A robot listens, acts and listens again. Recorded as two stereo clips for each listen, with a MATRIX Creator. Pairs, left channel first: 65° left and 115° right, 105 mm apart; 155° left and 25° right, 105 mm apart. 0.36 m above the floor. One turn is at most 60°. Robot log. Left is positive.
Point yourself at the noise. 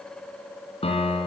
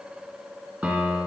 note: The piano: 55° left.
cmd yaw +55
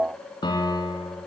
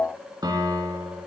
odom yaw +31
note: The piano is now 20° left.
cmd yaw +20
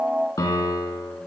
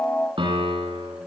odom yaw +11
note: The piano is now 10° left.
cmd yaw +10
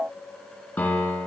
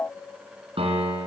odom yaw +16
note: The piano is now 10° right.
cmd yaw -10
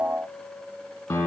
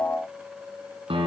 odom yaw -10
end: Facing the piano.